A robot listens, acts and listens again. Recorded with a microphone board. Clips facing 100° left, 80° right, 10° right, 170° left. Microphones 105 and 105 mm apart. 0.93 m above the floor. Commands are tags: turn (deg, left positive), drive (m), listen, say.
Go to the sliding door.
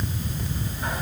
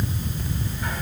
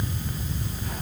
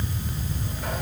<listen/>
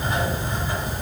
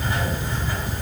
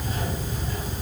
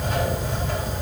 <listen/>
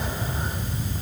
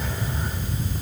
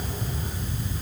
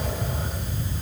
<say>I can't make out a sliding door to turn to.</say>